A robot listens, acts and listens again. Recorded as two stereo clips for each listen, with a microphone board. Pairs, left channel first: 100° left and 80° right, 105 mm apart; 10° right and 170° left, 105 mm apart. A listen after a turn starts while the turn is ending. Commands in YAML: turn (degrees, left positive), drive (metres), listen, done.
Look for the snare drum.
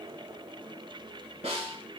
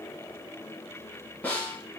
turn: -85
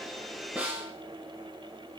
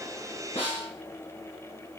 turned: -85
done: "Facing the snare drum, under 1 m away."